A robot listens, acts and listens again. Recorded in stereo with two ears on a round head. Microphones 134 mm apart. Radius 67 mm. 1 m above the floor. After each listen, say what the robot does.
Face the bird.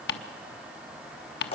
Keep listening.
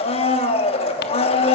Keep listening.
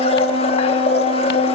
I can't make out a bird, only ticking and a blender.